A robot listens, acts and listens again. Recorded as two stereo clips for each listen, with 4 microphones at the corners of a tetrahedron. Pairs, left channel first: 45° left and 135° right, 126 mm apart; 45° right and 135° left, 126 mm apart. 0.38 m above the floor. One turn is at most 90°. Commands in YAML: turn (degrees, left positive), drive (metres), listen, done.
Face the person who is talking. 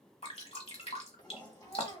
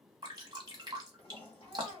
turn: 30
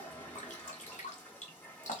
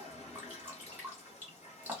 listen: true
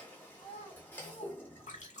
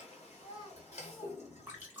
turn: 10
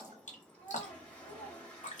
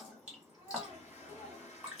done: "Facing the child speaking, 1 to 2 m away."